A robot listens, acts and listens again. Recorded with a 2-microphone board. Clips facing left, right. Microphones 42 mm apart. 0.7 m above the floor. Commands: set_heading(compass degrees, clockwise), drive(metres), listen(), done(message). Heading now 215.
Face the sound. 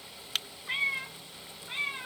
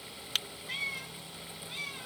set_heading(180)
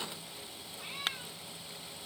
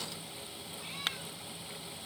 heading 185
listen()
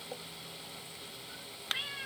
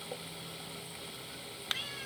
set_heading(170)
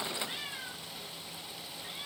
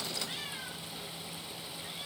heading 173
listen()
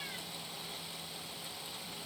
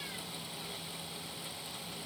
listen()
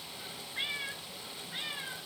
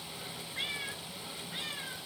done("Found it: a cat meowing, straight ahead.")